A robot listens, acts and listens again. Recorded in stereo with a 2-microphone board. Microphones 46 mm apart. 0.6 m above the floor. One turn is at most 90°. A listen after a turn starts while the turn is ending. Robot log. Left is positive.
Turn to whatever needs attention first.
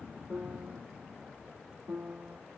cmd idle
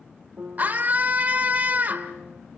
note: The scream: about 40° right or 140° right.
cmd yaw -40
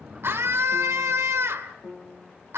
note: So it is at 100° right.
cmd yaw -90
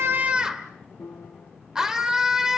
note: The scream is now 15° right.
cmd yaw -15
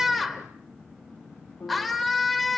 end: Found it: a scream, straight ahead, 1 to 2 m away.